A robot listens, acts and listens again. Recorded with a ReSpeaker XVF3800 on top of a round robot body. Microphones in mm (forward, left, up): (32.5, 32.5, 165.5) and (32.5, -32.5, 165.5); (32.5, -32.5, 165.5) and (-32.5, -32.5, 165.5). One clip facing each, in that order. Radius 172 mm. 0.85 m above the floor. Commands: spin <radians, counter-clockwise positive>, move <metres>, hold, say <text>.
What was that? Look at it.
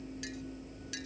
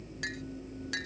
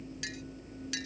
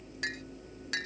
spin -2.27
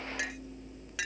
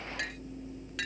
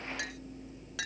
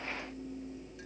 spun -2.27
say Found it: a clink, straight ahead.